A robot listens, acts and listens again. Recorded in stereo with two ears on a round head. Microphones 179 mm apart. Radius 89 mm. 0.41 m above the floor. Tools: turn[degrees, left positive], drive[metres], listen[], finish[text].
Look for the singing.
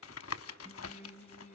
Thought: The singing: about 40° left or 140° left.
Action: turn[40]
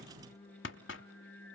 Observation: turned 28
Thought: So it is at 115° left.
Action: turn[115]
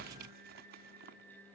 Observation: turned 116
Action: finish[Found it: singing, straight ahead, 2 to 4 m away.]